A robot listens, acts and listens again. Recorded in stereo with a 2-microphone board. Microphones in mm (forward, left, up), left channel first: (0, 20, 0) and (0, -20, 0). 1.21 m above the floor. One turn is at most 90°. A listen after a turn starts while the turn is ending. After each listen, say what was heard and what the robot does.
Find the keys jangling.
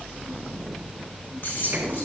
The keys jangling: about 55° left or 125° left. Turn 55° left.
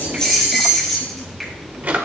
Facing the keys jangling, 2 to 4 m away.